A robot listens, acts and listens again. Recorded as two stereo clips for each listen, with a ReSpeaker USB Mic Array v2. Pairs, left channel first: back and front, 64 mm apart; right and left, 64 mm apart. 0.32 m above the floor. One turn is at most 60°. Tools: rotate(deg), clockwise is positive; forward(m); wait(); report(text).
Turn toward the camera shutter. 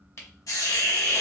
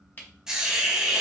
rotate(60)
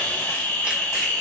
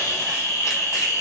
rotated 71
rotate(60)
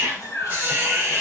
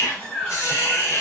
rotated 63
rotate(10)
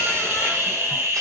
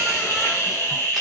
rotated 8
report("I heard a camera shutter from this way, but can't make it out now.")